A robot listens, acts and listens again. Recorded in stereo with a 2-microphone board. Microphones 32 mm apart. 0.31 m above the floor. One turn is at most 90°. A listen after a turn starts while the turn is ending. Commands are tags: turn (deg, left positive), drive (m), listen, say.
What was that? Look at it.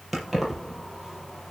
<turn deg="-30"/>
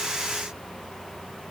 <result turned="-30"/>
<listen/>
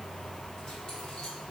<turn deg="25"/>
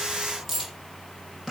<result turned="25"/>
<say>Facing the keys jangling, over 4 m away.</say>